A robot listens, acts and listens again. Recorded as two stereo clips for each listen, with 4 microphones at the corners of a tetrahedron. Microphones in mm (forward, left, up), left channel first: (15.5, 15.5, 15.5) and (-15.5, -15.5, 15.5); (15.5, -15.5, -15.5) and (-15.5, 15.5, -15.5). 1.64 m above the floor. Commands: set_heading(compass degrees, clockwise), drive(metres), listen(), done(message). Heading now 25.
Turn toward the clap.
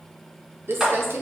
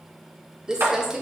set_heading(235)
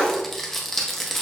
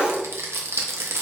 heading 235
listen()
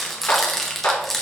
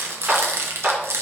set_heading(160)
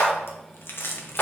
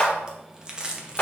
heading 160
done("Facing the clap.")